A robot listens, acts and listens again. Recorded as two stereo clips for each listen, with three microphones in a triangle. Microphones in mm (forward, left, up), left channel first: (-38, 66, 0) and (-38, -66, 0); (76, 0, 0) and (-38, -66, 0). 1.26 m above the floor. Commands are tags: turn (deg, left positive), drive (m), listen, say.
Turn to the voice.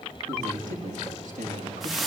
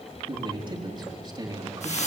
<turn deg="-90"/>
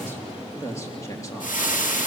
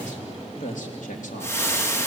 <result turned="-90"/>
<turn deg="25"/>
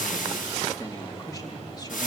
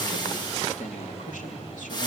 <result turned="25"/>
<turn deg="35"/>
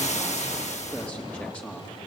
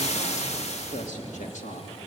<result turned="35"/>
<turn deg="10"/>
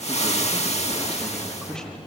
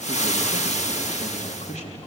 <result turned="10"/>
<say>Found it: a man speaking, straight ahead.</say>